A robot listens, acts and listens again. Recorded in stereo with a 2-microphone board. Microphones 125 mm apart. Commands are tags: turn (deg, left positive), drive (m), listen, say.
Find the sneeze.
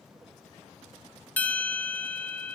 <listen/>
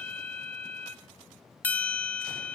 <listen/>
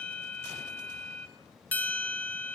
<say>I can't make out a sneeze to turn to.</say>